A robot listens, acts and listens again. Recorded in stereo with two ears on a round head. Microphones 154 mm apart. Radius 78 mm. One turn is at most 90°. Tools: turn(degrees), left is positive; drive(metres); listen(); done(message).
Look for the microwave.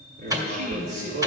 turn(degrees=-20)
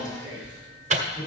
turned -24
turn(degrees=-90)
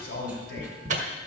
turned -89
turn(degrees=-45)
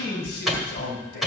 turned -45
done("Found it: a microwave, straight ahead.")